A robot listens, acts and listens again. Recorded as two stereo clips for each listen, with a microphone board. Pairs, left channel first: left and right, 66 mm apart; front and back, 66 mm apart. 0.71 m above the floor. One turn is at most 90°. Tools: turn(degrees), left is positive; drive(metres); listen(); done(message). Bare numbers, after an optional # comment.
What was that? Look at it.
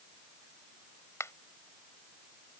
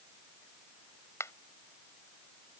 # The finger snap: 45° left.
turn(45)
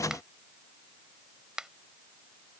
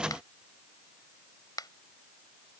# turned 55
# The finger snap is now 10° right.
turn(-10)
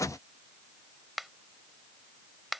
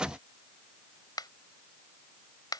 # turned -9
done("Facing the finger snap.")